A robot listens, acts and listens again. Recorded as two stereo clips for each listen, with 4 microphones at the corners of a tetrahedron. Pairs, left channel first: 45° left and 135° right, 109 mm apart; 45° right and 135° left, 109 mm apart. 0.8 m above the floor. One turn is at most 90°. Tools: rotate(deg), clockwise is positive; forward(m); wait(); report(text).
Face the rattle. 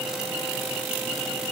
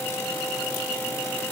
wait()
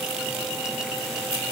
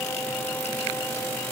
wait()
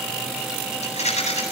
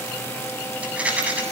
rotate(-55)
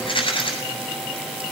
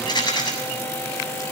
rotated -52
report("Found it: a rattle, straight ahead.")